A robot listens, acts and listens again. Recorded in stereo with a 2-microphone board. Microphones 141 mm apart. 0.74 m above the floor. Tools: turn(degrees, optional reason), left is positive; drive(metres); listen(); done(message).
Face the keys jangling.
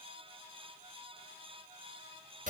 listen()
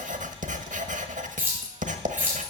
turn(degrees=-30)
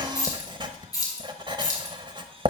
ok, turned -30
turn(degrees=30, reason="So it is at 30° left.")
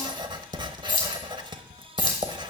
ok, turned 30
turn(degrees=30, reason="The keys jangling is now 30° left.")
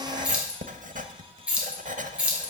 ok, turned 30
turn(degrees=-10, reason="The keys jangling is now 10° right.")
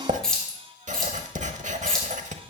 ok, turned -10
done("Facing the keys jangling.")